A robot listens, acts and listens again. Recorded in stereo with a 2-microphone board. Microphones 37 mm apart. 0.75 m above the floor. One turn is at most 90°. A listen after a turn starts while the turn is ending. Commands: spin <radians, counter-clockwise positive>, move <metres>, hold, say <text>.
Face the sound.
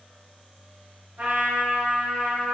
spin -1.13
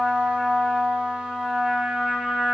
spin -0.52
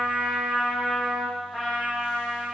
spin -0.26
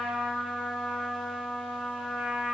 say Found it: a trumpet, straight ahead, 1 to 2 m away.